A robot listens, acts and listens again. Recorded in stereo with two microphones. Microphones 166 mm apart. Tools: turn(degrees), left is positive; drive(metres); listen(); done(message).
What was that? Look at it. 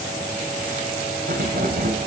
turn(degrees=-60)
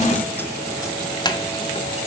turn(degrees=25)
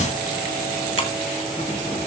listen()
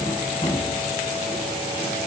turn(degrees=35)
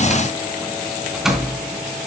done("Facing the keys jangling, 2 to 4 m away.")